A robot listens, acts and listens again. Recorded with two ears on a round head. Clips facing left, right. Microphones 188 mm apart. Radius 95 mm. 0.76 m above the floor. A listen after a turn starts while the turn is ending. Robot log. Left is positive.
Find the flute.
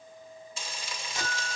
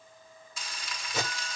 note: The flute: about 75° right or 105° right.
cmd yaw -75
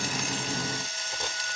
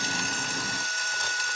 note: So it is at 15° right.
cmd yaw -15
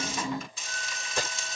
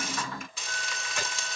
end: Found it: a flute, straight ahead, 2 to 4 m away.